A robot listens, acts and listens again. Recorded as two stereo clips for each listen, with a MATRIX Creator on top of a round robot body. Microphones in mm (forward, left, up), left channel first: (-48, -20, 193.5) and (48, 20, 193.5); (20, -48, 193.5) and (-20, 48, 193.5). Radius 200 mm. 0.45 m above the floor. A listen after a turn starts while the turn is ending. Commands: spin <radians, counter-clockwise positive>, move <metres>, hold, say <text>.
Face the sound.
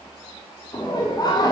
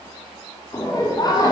spin -2.01
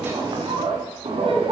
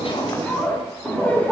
spin 0.17
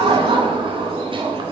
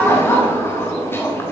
say Found it: laughter, straight ahead.